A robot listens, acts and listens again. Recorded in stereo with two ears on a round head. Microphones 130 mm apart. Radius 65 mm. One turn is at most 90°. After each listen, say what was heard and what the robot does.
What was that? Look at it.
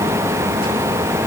Keep listening.
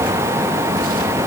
Keep listening.
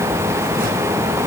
I can't make out anything to turn to.